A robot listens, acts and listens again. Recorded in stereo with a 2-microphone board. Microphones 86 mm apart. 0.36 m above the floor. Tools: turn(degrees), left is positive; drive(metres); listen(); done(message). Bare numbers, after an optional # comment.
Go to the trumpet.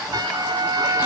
# The trumpet: about 50° right or 130° right.
turn(-50)
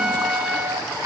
drive(1.0)
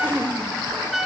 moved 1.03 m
drive(1.0)
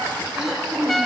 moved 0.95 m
drive(1.0)
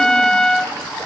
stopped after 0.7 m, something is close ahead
# The trumpet is now 10° left.
turn(10)
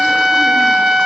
done("I am next to the trumpet.")